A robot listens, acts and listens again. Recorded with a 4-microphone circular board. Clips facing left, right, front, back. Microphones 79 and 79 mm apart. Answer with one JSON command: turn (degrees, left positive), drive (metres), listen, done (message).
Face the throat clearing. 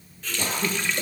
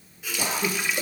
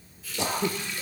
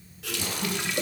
{"turn": -10}
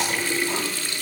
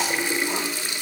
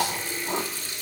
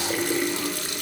{"listen": true}
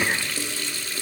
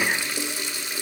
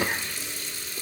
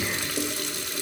{"done": "Found it: throat clearing, straight ahead."}